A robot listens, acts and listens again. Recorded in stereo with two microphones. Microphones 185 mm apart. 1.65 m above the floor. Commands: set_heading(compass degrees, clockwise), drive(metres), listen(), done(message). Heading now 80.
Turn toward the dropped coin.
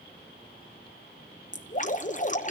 listen()
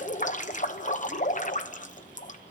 listen()
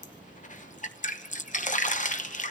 done("I can't make out a dropped coin, only dripping.")